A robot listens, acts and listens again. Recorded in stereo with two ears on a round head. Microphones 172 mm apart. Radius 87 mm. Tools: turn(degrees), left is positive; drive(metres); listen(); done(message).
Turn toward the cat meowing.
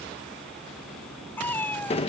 turn(degrees=30)
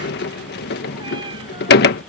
listen()
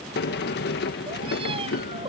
listen()
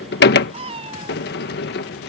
turn(degrees=-30)
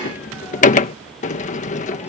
listen()
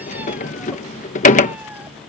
listen()
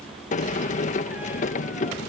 done("Facing where the cat meowing came from. I can't hear it now.")